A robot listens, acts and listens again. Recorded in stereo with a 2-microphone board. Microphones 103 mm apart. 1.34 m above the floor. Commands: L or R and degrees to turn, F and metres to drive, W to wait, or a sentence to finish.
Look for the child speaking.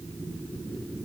W
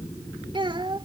R50
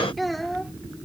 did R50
Facing the child speaking.